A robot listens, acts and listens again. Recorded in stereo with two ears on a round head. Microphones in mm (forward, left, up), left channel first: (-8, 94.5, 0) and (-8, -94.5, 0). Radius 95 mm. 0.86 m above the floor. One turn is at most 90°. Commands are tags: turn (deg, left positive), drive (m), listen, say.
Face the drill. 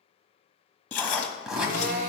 <turn deg="-45"/>
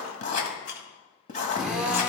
<say>Found it: a drill, straight ahead, under 1 m away.</say>